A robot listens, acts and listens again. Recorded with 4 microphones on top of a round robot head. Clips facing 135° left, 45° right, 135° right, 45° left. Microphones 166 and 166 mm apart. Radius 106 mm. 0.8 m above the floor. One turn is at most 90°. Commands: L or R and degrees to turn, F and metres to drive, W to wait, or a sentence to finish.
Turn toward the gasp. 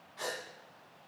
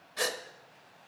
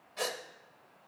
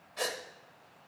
R50
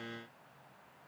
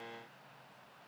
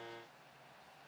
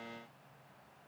I heard a gasp from this way, but can't make it out now.